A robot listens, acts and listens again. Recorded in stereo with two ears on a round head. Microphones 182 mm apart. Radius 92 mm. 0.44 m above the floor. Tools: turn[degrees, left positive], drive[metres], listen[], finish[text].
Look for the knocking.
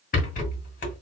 Action: listen[]
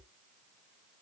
Action: listen[]
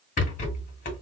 Action: finish[I can't make out knocking to turn to.]